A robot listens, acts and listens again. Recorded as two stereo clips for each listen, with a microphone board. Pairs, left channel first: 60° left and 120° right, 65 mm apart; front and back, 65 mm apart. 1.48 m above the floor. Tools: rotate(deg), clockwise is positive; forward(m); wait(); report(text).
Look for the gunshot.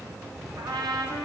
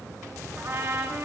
wait()
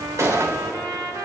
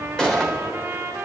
rotate(75)
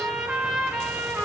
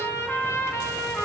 report("I heard a gunshot from this way, but can't make it out now.")